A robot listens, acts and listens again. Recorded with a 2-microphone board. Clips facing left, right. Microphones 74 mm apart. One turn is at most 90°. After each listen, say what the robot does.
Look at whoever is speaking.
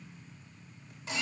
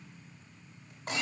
Keep listening.
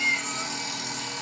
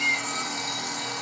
Keep listening.
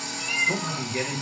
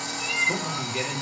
Turn 35° left.
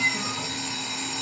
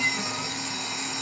Keep listening.
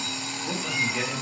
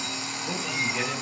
Turn 25° left.
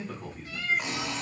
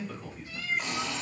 Turn 35° left.
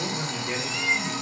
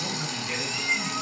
Turn 90° left.
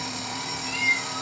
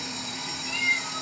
Turn 40° left.
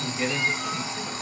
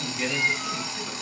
Facing the man speaking.